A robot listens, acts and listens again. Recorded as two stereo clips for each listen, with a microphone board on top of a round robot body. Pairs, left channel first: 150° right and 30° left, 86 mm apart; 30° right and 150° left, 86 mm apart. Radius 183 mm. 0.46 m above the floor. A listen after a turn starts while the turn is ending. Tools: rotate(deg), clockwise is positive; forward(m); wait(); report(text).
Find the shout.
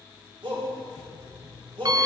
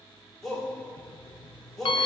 rotate(-60)
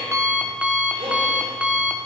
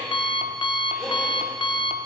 wait()
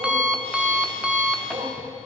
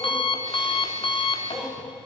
wait()
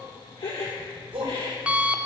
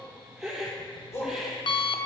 rotate(-25)
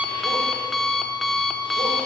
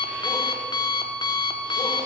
wait()
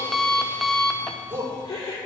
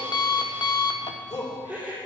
rotate(-10)
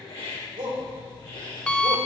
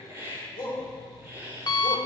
report("Found it: a shout, straight ahead, 2 to 4 m away.")